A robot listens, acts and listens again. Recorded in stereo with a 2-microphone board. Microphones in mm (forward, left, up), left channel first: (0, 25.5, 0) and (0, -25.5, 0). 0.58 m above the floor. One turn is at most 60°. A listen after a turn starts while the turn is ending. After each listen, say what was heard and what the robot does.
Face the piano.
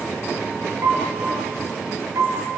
The piano: about 75° right or 105° right. Turn 60° right.
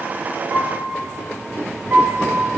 So it is at 45° right. Turn 45° right.
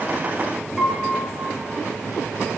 The piano is now 10° right. Turn 10° right.
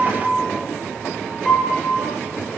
Facing the piano, over 4 m away.